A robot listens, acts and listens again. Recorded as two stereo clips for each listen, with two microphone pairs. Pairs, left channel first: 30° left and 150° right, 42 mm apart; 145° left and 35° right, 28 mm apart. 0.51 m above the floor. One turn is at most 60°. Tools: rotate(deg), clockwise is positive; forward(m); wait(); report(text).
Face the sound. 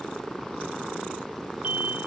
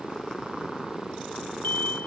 rotate(-60)
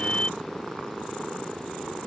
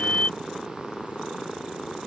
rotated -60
rotate(-60)
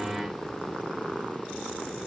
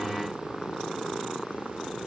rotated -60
rotate(-40)
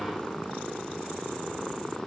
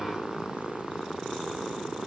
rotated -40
report("Facing where the explosion came from. I can't hear it now.")